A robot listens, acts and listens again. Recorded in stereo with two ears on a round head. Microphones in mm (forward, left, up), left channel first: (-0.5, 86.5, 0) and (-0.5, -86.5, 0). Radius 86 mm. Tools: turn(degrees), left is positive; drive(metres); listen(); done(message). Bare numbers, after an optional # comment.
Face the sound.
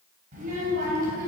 # The child speaking: about 50° right or 130° right.
turn(-50)
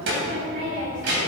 # So it is at 60° right.
turn(-60)
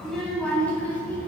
# The child speaking is now 10° left.
turn(10)
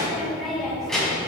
done("Facing the child speaking.")